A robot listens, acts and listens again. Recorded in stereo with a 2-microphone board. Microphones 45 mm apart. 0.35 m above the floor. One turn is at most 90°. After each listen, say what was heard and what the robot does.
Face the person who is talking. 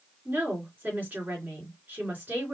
The woman speaking: about 40° right or 140° right. Turn 40° right.
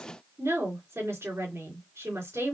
So it is at 100° right. Turn 90° right.
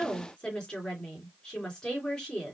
The woman speaking is now 20° left. Turn 20° left.
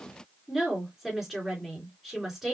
Facing the woman speaking, 2 to 4 m away.